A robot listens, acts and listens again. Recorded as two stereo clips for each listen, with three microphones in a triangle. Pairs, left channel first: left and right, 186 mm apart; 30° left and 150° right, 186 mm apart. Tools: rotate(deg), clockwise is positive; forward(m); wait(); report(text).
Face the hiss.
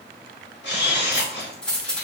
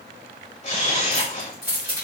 wait()
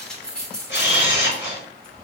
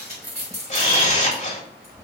wait()
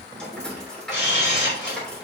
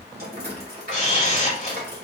report("I can't make out a hiss, only a camera shutter and keys jangling.")